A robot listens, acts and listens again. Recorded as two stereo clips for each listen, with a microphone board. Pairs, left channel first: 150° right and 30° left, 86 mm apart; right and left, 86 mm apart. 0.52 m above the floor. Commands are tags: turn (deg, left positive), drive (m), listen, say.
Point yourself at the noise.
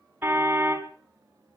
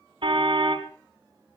<turn deg="95"/>
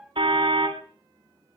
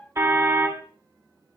<turn deg="30"/>
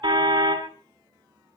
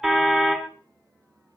<say>Facing the car horn.</say>